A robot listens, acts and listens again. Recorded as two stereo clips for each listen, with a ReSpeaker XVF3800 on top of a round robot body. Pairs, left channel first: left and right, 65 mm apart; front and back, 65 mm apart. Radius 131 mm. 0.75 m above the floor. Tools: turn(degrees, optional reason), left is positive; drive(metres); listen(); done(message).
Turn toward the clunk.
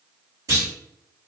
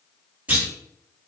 turn(degrees=-115, reason="The clunk: 115° right.")
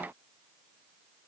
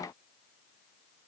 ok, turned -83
turn(degrees=-30, reason="Nothing new. It was at 30° right.")
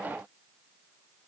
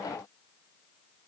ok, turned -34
done("Facing where the clunk came from. I can't hear it now.")